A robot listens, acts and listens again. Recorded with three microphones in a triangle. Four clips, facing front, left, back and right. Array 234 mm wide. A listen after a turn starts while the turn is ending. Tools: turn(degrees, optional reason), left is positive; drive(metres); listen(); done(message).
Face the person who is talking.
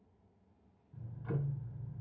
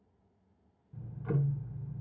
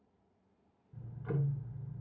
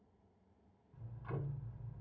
listen()
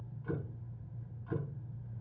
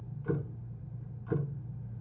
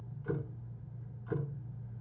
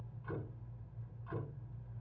listen()
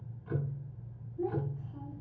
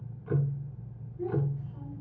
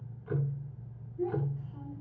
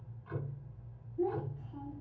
turn(degrees=-85, reason="The child speaking: 85° right.")
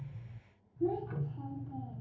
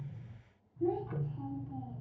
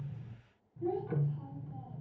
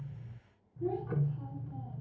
turn(degrees=25, reason="The child speaking is now 25° left.")
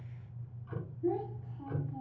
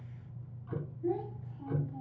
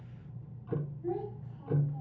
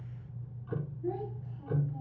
turn(degrees=10, reason="The child speaking is now 10° left.")
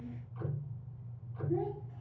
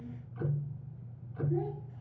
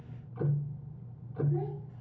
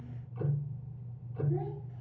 listen()
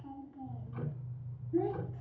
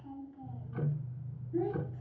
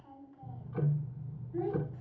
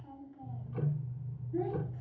done("Facing the child speaking, 2 to 4 m away.")